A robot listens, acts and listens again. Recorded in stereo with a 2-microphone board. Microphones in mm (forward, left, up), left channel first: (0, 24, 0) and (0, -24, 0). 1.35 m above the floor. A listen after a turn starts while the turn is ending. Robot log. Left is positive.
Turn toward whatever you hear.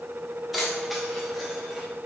cmd yaw +30
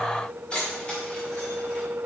note: So it is at 160° left.
cmd yaw +160
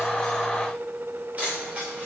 note: The keys jangling is now 30° right.
cmd yaw -30
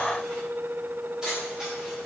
note: The keys jangling is now 15° right.
cmd yaw -15
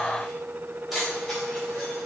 end: Facing the keys jangling.